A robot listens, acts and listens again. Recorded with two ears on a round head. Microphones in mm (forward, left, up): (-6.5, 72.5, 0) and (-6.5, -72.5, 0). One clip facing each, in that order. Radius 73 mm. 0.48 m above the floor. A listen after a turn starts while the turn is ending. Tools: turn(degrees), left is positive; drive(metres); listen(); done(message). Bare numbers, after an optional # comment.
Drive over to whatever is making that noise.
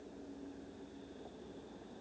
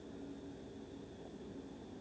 listen()
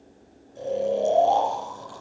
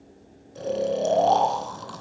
# The snoring: about 70° right or 110° right.
turn(-70)
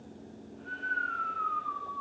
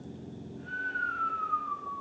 drive(1.0)
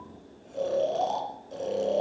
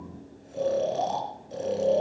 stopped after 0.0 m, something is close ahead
done("Something is in my way. I am facing the snoring but have not reached it.")